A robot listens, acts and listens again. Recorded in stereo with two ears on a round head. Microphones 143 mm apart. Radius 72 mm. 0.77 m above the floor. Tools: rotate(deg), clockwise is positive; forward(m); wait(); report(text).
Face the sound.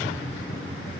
wait()
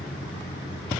wait()
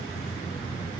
report("I can't make out anything to turn to.")